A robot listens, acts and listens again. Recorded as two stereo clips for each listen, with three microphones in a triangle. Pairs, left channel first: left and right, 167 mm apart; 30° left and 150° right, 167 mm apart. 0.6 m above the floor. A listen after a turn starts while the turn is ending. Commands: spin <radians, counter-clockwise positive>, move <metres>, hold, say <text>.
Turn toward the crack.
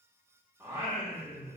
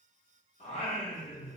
hold
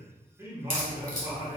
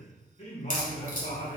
spin 0.96
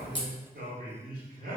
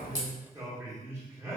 say I heard a crack from this way, but can't make it out now.